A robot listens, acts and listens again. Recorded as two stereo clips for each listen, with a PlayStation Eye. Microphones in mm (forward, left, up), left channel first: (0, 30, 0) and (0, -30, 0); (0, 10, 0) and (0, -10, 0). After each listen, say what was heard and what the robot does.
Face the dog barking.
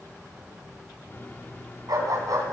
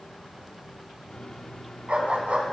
Turn 90° right.
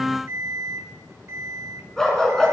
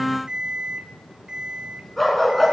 So it is at 10° left. Turn 10° left.
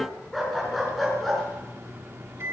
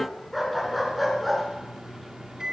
Facing the dog barking, over 4 m away.